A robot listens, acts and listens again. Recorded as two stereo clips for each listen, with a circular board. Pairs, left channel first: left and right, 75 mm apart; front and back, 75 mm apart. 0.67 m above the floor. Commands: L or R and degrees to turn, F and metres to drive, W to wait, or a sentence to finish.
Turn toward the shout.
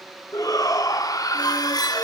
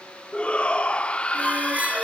L70
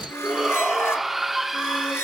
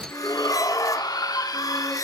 Facing the shout, 1 to 2 m away.